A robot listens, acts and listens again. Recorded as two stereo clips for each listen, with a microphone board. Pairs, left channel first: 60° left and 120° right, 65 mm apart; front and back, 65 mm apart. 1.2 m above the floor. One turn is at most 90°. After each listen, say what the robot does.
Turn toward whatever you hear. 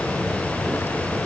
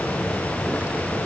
Keep listening.
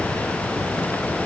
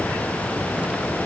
Keep listening.
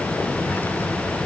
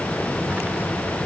I can't make out anything.